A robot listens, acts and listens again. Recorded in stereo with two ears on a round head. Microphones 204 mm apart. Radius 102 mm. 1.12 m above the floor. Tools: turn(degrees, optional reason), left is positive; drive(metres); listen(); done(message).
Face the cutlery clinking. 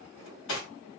turn(degrees=65, reason="The cutlery clinking: about 65° left or 115° left.")
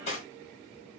turn(degrees=35, reason="So it is at 35° left.")
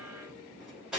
done("Facing the cutlery clinking.")